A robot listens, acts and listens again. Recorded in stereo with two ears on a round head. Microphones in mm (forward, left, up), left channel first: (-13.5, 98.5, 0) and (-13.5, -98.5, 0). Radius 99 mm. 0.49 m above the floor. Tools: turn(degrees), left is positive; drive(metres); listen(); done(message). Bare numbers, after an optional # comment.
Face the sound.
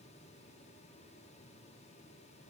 listen()
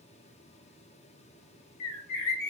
# The bird: about 70° left or 110° left.
turn(70)
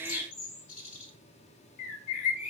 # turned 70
# So it is at 35° left.
turn(35)
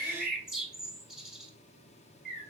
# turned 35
done("Facing the bird.")